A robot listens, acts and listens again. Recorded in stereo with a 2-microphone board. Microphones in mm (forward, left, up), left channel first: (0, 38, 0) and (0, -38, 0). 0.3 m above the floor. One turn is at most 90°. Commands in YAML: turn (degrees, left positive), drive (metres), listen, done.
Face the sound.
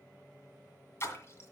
turn: 35
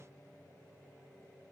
listen: true
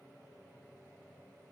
done: "I heard a splash, but can't make it out now. It was about straight ahead or 110° left."